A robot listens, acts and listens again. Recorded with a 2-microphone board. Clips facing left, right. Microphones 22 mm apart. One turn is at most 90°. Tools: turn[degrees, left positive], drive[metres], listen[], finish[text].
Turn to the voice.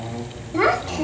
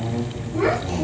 Thought: The child speaking: about 50° left or 130° left.
Action: turn[50]
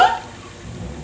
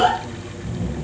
Thought: So it is at 60° left.
Action: turn[60]
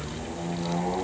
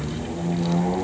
Action: listen[]
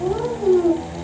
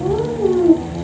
Action: finish[Facing the child speaking.]